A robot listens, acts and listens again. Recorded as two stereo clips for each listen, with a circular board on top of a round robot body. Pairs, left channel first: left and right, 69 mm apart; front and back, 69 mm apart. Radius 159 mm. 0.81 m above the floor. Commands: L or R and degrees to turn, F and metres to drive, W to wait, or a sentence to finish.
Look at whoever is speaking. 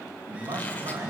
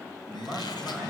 R85
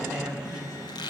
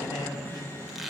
R10
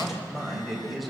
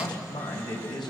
Facing the man speaking.